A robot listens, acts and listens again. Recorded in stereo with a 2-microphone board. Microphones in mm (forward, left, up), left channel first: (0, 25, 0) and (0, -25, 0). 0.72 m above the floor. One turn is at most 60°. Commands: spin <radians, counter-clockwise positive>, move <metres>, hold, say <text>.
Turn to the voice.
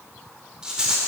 hold
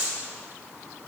hold
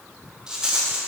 say I can't make out anyone speaking to turn to.